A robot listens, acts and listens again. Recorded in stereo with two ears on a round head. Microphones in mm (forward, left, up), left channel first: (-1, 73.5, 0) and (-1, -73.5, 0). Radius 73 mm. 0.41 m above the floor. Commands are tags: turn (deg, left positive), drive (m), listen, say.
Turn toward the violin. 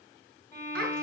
<turn deg="15"/>
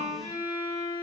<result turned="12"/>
<turn deg="150"/>
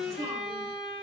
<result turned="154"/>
<say>Facing the violin.</say>